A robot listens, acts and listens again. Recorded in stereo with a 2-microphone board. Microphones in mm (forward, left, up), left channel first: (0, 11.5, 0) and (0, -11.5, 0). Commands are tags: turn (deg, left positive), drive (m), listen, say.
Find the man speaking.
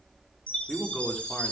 <turn deg="30"/>
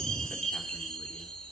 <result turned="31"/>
<listen/>
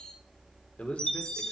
<turn deg="105"/>
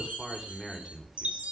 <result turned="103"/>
<turn deg="-10"/>
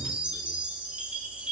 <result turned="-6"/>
<listen/>
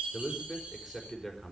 <say>Found it: a man speaking, straight ahead, over 4 m away.</say>